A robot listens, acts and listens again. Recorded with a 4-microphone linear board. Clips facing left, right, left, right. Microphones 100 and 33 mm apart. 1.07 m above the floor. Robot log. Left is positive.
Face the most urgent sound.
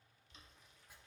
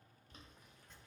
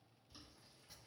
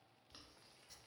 cmd idle
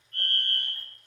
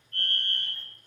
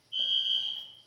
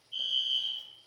cmd yaw +30
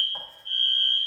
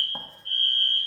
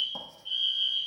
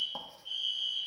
note: So it is at 155° left.
cmd yaw +155
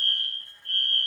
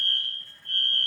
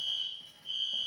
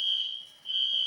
note: The fire alarm is now 25° right.
cmd yaw -25
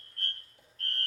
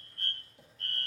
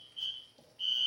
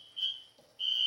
end: Found it: a fire alarm, straight ahead, 2 to 4 m away.